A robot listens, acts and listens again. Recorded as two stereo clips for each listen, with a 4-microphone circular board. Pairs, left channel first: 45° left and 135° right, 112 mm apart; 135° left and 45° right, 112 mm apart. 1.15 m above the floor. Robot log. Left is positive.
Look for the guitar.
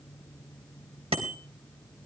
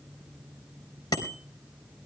cmd idle
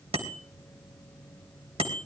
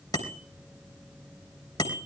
cmd idle
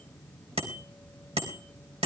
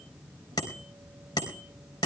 end: I can't make out a guitar to turn to.